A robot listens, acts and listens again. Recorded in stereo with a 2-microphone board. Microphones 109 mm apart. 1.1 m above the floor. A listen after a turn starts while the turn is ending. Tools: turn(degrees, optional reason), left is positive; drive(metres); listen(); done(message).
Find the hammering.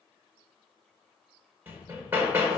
turn(degrees=-20, reason="The hammering: about 20° right or 160° right.")
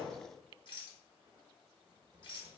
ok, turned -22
listen()
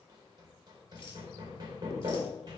turn(degrees=-135, reason="So it is at 135° right.")
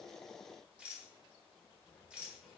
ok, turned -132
listen()
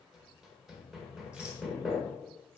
done("Found it: hammering, straight ahead, 1 to 2 m away.")